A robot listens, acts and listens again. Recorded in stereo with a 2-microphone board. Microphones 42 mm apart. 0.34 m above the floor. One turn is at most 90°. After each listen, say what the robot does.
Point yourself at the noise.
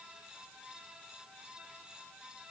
Keep listening.
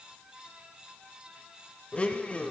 Turn 30° left.
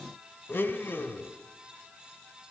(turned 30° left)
Turn 90° left.
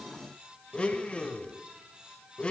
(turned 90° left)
Turn 30° left.
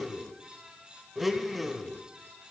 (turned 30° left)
Facing the blender, under 1 m away.